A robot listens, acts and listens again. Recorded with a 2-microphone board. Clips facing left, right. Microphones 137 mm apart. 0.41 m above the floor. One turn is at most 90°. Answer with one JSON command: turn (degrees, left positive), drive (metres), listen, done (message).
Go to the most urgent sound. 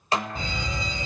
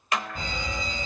{"turn": -50}
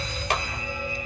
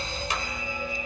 {"turn": -70}
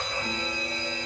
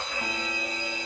{"turn": -10}
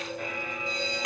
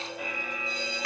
{"drive": 1.0}
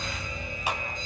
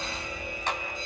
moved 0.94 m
{"drive": 1.0}
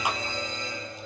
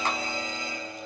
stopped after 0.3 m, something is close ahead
{"turn": -10}
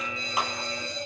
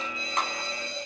{"done": "Blocked. The fire alarm is further on, straight ahead."}